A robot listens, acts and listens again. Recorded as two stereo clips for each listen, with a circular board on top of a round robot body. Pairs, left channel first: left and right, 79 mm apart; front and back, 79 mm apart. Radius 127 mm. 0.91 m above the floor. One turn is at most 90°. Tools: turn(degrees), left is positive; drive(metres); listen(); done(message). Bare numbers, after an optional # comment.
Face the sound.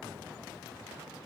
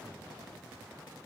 listen()
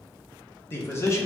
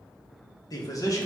# The man speaking: 40° left.
turn(40)
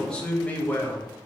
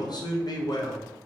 # The man speaking is now 25° left.
turn(25)
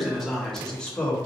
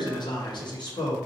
# The man speaking is now 10° left.
turn(10)
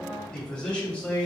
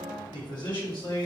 # The man speaking is now 15° left.
turn(15)
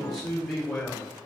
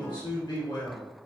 done("Found it: a man speaking, straight ahead, 2 to 4 m away.")